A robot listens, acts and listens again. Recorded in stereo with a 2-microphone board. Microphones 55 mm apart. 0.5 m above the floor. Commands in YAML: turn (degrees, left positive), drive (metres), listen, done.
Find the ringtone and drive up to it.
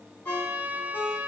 turn: 40
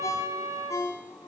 turn: 105
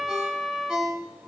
turn: -10
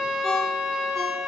drive: 1.0
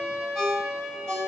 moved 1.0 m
turn: 10
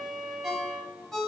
drive: 1.0
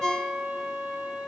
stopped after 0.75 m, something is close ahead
turn: 10
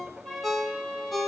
done: "Arrived at the ringtone, straight ahead."